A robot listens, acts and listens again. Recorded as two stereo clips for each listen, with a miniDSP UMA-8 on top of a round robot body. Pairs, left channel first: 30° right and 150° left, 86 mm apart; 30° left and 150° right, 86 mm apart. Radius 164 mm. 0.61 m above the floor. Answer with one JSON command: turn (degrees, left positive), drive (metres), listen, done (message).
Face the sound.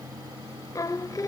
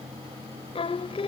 {"turn": 20}
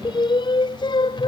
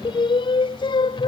{"done": "Found it: singing, straight ahead."}